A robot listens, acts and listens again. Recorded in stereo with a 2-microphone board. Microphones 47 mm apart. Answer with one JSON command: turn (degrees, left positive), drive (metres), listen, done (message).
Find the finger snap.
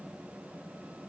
{"listen": true}
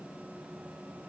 {"listen": true}
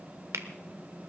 {"turn": -70}
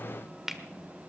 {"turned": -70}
{"turn": -10}
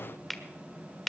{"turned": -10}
{"done": "Facing the finger snap."}